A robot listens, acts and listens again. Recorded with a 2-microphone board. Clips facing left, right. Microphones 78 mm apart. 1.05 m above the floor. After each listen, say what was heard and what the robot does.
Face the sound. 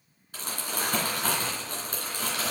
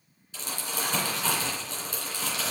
The crumpling: about 50° left or 130° left. Turn 50° left.
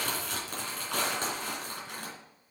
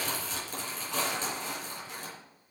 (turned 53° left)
So it is at 70° left. Turn 70° left.
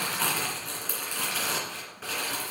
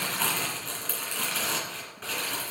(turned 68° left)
Found it: crumpling, straight ahead.